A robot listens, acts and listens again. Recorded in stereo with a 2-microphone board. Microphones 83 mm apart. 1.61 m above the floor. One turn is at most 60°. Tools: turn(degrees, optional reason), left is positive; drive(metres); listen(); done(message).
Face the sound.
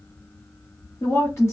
turn(degrees=35, reason="The woman speaking: about 35° left or 145° left.")
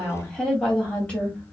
turn(degrees=15, reason="So it is at 15° left.")
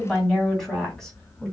turn(degrees=10, reason="The woman speaking is now 10° left.")
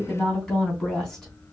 done("Facing the woman speaking.")